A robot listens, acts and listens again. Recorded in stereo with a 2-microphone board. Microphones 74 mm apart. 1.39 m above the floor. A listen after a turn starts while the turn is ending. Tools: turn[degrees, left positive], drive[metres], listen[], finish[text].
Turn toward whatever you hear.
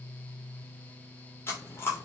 Thought: The chewing: about 30° left or 150° left.
Action: turn[30]
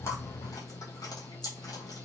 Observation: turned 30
Thought: So it is at 120° left.
Action: turn[120]
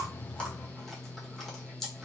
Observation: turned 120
Action: finish[Facing the chewing, 1 to 2 m away.]